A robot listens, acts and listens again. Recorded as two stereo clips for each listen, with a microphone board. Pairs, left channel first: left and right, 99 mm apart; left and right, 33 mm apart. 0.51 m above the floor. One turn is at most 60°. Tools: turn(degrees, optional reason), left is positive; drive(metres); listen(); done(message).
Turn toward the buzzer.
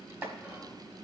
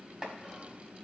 listen()
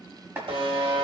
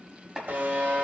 turn(degrees=-60, reason="The buzzer: about 70° right or 110° right.")
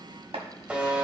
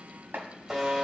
turn(degrees=-15, reason="So it is at 15° right.")
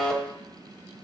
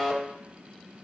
done("Facing the buzzer.")